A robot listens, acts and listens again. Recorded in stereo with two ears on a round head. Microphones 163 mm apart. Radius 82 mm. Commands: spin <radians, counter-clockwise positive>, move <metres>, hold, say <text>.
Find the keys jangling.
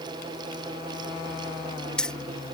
spin 0.52
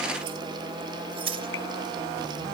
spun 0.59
spin -0.61
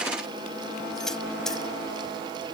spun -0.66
say Facing the keys jangling.